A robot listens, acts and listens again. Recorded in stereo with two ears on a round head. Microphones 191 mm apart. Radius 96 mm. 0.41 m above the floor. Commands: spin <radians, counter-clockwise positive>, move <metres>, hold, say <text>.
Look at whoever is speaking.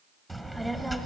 spin 0.52
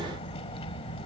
spin 2.62
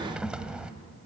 say Found it: a child speaking, straight ahead, 1 to 2 m away.